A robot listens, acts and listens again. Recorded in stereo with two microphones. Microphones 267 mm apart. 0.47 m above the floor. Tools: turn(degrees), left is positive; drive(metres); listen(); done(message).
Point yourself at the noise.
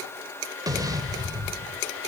turn(degrees=-30)
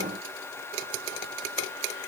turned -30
listen()
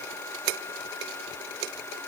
done("I heard an explosion, but can't make it out now. It was about 20° left or 140° right.")